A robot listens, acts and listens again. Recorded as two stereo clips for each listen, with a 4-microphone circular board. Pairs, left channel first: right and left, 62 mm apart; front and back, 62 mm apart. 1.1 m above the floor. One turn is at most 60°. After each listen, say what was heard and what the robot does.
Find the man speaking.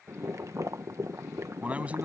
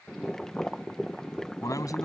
The man speaking: 25° left. Turn 25° left.
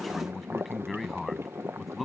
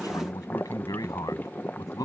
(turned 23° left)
Found it: a man speaking, straight ahead.